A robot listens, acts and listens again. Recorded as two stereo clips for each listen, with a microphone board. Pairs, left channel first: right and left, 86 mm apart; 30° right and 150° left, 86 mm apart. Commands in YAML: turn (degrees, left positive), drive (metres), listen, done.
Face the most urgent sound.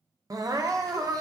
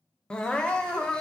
turn: 50
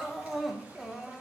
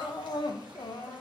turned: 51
done: "Found it: crying, straight ahead."